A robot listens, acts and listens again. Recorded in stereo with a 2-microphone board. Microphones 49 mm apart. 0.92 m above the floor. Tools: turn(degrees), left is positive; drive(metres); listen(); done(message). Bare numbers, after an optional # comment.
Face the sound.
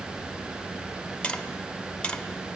# The tapping: about 15° left or 165° left.
turn(15)
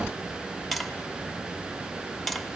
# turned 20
done("Found it: tapping, straight ahead, under 1 m away.")